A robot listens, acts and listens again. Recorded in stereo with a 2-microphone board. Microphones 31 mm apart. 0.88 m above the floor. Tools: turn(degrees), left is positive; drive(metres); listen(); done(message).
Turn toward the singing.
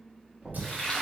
turn(degrees=-70)
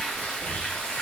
listen()
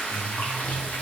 turn(degrees=35)
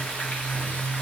turn(degrees=55)
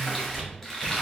turn(degrees=-15)
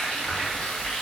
listen()
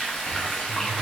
listen()
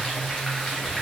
done("I heard singing from this way, but can't make it out now.")